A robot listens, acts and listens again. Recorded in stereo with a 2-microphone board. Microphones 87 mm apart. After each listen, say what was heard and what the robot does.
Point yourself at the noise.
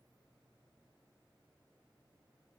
Keep listening.
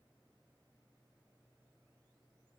Keep listening.
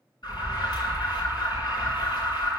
The alarm: about 55° left or 125° left. Turn 55° left.
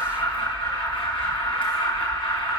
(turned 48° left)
So it is at 75° left. Turn 75° left.
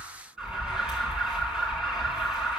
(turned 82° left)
Found it: an alarm, straight ahead.